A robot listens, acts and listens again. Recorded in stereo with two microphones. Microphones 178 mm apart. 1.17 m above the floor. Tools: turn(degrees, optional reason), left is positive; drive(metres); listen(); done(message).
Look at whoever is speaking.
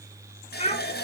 turn(degrees=40, reason="The child speaking: about 40° left or 140° left.")
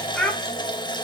done("Facing the child speaking.")